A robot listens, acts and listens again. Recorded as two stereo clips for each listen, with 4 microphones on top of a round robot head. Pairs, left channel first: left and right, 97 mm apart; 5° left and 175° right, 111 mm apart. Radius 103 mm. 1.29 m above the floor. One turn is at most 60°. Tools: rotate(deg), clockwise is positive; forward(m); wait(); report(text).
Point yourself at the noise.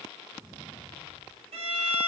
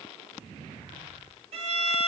rotate(60)
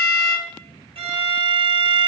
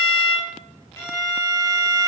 rotate(60)
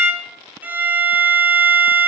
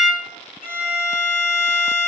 rotate(15)
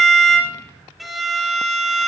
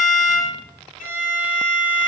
report("Facing the violin, under 1 m away.")